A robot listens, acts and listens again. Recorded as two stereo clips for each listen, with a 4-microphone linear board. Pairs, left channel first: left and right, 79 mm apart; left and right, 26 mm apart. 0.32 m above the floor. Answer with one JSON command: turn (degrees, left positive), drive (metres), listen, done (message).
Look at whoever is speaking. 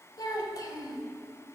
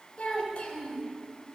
{"turn": 60}
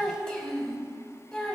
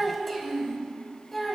{"turn": 10}
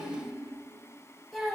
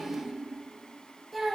{"done": "Found it: a child speaking, straight ahead, under 1 m away."}